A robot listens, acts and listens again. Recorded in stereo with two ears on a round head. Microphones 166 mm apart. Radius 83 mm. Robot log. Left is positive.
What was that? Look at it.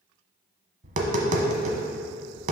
note: The tapping: about 40° right or 140° right.
cmd yaw -40
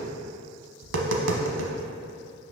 note: So it is at 100° right.
cmd yaw -100
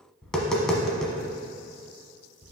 end: Facing the tapping, under 1 m away.